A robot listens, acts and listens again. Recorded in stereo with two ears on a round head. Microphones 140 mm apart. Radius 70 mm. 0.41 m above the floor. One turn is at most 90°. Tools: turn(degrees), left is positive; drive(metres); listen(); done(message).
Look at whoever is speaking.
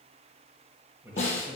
turn(degrees=-15)
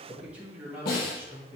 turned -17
turn(degrees=-30)
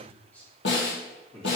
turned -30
done("Found it: a man speaking, straight ahead, 2 to 4 m away.")